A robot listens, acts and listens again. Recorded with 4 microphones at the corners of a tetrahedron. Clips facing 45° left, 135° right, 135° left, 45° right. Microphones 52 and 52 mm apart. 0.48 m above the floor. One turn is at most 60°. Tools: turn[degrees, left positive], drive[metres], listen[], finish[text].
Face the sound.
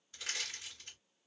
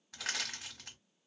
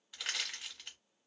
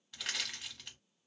Thought: The crushing: 140° right.
Action: turn[-60]
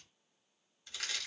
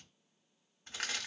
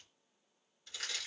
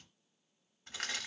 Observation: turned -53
Thought: The crushing is now 85° right.
Action: turn[-60]
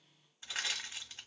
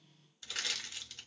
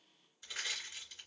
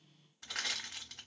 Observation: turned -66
Thought: The crushing is now 20° right.
Action: turn[-20]
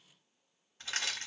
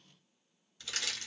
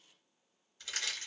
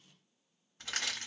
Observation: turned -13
Action: finish[Facing the crushing.]